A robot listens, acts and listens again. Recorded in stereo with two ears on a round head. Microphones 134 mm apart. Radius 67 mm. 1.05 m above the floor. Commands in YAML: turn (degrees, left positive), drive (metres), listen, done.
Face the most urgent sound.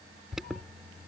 turn: 30
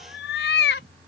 listen: true
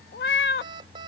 turn: -30
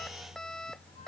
done: "Found it: an alarm, straight ahead."